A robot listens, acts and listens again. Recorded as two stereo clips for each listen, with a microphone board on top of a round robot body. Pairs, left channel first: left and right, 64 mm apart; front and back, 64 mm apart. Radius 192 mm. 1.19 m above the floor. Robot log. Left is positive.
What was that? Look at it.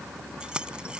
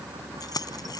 note: The keys jangling: 15° right.
cmd yaw -15
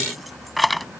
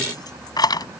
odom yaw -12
end: Found it: keys jangling, straight ahead.